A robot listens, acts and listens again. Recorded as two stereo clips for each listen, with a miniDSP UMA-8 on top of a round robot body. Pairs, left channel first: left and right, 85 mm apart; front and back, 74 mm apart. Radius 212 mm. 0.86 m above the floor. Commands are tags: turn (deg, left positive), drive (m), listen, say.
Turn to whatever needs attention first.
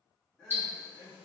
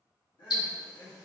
<turn deg="10"/>
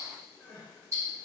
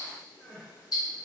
<say>Found it: crying, straight ahead, under 1 m away.</say>